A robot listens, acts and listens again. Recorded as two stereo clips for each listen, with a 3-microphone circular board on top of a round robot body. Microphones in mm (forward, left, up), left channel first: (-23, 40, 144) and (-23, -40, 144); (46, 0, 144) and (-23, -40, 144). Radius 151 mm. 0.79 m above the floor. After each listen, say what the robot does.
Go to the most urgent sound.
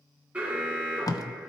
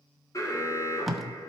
Turn 15° right.
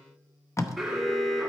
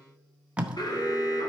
Drive 1.0 m forward.
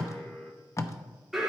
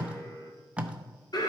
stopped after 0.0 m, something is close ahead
Blocked. The alarm is further on, straight ahead.